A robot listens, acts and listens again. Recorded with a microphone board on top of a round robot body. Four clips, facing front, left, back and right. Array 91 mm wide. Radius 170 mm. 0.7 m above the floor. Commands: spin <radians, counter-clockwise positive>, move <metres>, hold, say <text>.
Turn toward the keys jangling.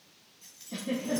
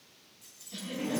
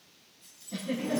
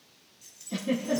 spin -0.26
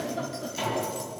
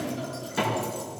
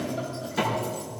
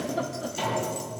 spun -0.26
spin -0.26
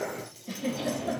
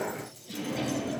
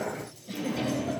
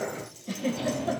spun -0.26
spin -0.26
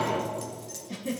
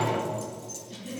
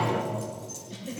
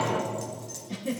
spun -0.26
spin -0.44
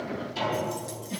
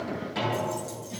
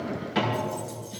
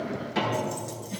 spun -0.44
spin -0.44
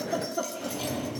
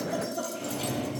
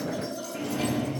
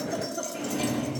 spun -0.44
spin -0.26
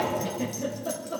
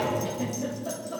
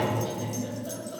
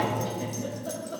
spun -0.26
say Facing the keys jangling, 1 to 2 m away.